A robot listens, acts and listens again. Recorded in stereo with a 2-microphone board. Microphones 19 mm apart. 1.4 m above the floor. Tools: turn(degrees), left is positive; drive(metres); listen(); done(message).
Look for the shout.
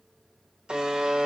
listen()
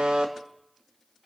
listen()
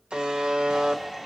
turn(degrees=-25)
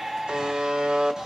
turn(degrees=-125)
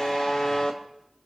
listen()
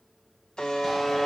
listen()
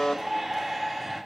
turn(degrees=10)
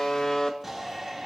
done("Found it: a shout, straight ahead, 2 to 4 m away.")